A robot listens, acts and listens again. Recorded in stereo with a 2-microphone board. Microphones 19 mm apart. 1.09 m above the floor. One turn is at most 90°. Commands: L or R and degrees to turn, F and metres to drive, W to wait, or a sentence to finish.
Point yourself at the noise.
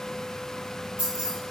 R70
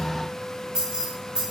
R45
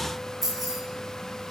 R10
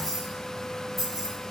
Found it: keys jangling, straight ahead, over 4 m away.